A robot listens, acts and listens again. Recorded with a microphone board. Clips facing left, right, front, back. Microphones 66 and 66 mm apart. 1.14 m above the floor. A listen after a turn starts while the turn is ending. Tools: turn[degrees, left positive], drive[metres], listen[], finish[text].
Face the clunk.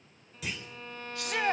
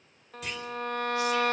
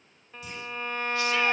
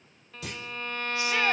Thought: The clunk: straight behind.
Action: turn[180]
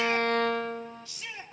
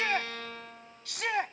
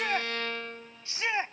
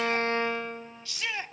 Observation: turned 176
Action: finish[I heard a clunk from this way, but can't make it out now.]